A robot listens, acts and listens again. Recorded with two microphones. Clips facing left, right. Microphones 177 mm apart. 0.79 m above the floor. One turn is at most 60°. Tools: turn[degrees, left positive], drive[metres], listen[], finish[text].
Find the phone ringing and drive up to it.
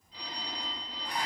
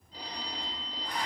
Thought: The phone ringing: about 40° right or 140° right.
Action: turn[-40]
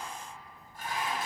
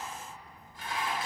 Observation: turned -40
Action: listen[]
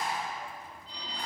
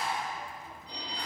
Thought: So it is at 100° right.
Action: turn[-60]
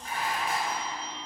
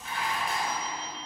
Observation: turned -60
Thought: The phone ringing is now 20° right.
Action: turn[-20]
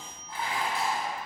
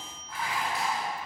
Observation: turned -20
Action: listen[]
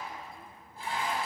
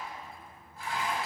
Action: listen[]
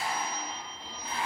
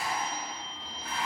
Action: drive[1.0]
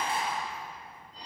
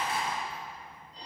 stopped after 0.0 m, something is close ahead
Action: finish[Something is in my way. I am facing the phone ringing but have not reached it.]